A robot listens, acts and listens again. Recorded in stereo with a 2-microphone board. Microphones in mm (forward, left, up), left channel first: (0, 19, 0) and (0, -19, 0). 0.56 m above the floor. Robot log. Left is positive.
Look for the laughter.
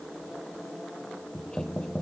cmd idle
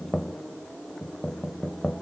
cmd idle
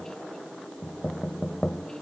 end: I can't make out laughter, only knocking.